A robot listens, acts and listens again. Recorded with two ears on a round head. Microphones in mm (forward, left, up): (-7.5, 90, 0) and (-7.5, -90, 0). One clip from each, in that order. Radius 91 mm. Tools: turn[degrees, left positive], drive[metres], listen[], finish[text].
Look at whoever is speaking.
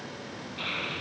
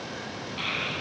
Thought: The child speaking: about 55° right or 125° right.
Action: turn[-55]
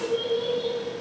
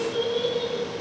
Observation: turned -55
Thought: So it is at 60° right.
Action: turn[-60]
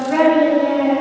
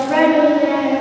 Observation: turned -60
Action: finish[Facing the child speaking.]